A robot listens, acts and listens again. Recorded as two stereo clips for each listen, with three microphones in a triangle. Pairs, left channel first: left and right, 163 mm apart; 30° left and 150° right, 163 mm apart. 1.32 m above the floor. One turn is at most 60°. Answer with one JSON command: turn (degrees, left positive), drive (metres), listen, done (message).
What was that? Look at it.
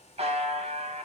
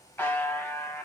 {"turn": -50}
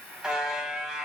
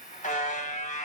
{"done": "Facing the buzzer, under 1 m away."}